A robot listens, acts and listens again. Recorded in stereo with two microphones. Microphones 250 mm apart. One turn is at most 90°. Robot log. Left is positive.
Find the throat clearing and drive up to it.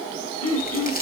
note: The throat clearing: about 75° left or 105° left.
cmd yaw +75
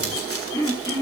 note: So it is at 15° left.
cmd yaw +15
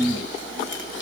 cmd fwd 1.0
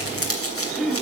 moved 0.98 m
cmd fwd 1.0
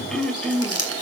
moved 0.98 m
cmd fwd 1.0
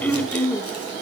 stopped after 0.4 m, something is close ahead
note: The throat clearing is now 10° left.
cmd yaw +10
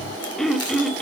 end: I am next to the throat clearing.